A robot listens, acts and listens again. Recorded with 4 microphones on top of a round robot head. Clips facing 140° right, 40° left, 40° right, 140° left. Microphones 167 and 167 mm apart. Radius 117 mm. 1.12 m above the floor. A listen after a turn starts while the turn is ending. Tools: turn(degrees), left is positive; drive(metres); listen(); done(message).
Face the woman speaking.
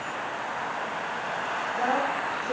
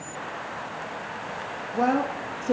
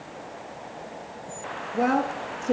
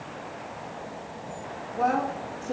turn(degrees=-15)
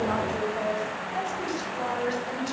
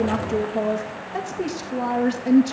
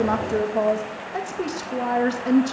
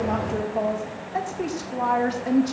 turn(degrees=20)
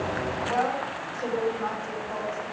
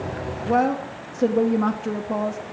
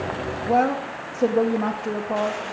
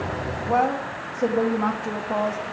turn(degrees=40)
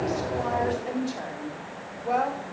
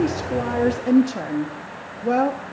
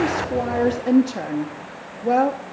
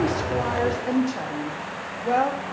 done("Found it: a woman speaking, straight ahead, 1 to 2 m away.")